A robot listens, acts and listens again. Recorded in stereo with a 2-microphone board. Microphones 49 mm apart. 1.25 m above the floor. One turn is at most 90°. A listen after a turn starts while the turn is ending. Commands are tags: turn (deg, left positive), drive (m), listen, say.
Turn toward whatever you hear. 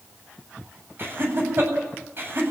<turn deg="-45"/>
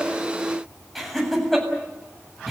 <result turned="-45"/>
<say>Found it: laughter, straight ahead, over 4 m away.</say>